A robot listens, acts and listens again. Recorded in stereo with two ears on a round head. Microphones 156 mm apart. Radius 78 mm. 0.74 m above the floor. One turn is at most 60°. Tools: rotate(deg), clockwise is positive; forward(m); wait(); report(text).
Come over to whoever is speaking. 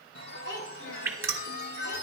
rotate(-60)
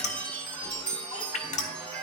wait()
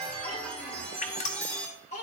rotate(-45)
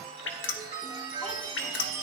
wait()
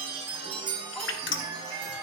wait()
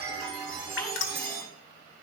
report("Facing where the child speaking came from. I can't hear it now. I did not reach it.")